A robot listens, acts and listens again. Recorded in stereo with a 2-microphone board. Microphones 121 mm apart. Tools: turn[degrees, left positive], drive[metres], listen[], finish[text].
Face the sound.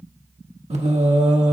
Thought: The singing: about 75° right or 105° right.
Action: turn[-75]
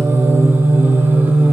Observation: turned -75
Thought: So it is at 15° right.
Action: turn[-15]
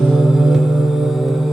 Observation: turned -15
Action: finish[Facing the singing.]